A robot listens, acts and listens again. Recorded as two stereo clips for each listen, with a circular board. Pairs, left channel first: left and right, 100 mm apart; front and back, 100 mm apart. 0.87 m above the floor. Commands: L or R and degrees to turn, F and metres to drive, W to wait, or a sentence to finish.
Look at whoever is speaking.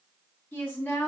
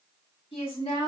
L15
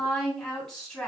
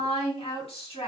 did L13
Facing the woman speaking.